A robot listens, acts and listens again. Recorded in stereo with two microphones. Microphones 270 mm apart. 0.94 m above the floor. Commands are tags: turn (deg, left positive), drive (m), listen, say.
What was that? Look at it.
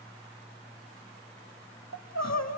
<turn deg="75"/>
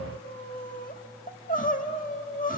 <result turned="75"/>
<turn deg="30"/>
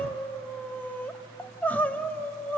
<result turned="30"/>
<say>Found it: crying, straight ahead, 1 to 2 m away.</say>